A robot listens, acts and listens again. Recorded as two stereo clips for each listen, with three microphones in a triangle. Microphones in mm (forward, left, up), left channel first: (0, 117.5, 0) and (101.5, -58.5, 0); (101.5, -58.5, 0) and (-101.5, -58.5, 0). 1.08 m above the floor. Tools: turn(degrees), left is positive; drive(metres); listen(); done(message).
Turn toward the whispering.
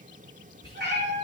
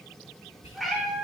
turn(degrees=55)
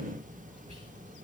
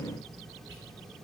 listen()
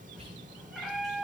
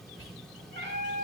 done("Facing the whispering, 2 to 4 m away.")